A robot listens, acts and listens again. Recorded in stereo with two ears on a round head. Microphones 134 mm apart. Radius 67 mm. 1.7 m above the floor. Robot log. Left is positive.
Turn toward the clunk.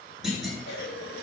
cmd yaw +30
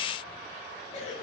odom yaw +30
cmd idle
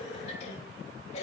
end: I heard a clunk, but can't make it out now. It was about 30° right or 150° left.